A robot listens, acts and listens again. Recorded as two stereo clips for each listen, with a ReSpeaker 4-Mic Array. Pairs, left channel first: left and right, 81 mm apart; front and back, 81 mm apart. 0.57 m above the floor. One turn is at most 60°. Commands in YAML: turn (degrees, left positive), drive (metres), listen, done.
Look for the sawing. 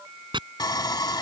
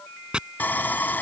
turn: 60
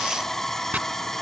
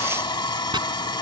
done: "Facing the sawing."